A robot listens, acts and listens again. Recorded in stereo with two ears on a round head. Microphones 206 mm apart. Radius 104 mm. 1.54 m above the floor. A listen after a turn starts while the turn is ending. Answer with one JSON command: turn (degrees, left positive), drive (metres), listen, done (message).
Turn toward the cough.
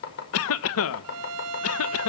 {"turn": 65}
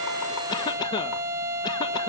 {"turn": 20}
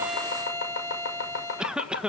{"done": "Found it: a cough, straight ahead, 1 to 2 m away."}